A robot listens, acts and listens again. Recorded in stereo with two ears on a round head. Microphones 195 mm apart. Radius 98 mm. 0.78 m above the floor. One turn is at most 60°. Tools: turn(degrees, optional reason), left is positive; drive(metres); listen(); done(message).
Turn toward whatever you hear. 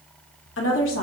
turn(degrees=60, reason="The woman speaking: about 65° left or 115° left.")
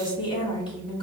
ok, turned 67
turn(degrees=25, reason="So it is at 25° left.")
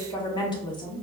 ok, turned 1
turn(degrees=25, reason="The woman speaking is now 25° left.")
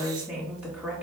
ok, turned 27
done("Facing the woman speaking.")